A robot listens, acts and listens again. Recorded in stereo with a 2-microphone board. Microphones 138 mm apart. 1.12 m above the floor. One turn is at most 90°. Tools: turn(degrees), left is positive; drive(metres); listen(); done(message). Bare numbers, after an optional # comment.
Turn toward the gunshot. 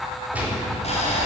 turn(-30)
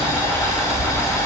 listen()
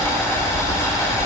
done("I heard a gunshot, but can't make it out now. It was about 20° left or 140° right.")